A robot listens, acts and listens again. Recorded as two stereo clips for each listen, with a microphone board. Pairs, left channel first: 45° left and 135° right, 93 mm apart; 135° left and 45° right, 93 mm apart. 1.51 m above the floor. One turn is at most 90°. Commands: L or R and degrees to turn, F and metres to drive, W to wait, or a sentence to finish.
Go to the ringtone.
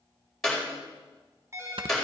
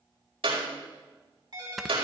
R80
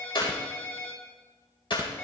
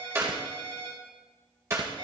R20
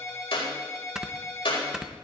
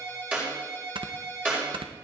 F1.0
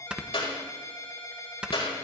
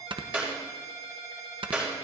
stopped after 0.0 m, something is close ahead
R10
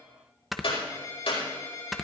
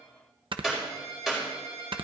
Blocked. The ringtone is further on, straight ahead.